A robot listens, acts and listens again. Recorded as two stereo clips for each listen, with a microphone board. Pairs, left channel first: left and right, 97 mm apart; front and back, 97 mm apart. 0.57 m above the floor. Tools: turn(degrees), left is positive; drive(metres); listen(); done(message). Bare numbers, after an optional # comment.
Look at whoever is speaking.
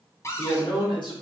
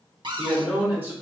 # The man speaking: 115° left.
turn(115)
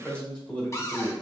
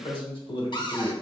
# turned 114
# The man speaking is now 15° left.
turn(15)
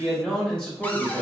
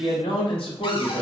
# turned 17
# The man speaking is now 10° left.
turn(10)
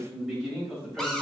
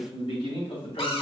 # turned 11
done("Found it: a man speaking, straight ahead, 2 to 4 m away.")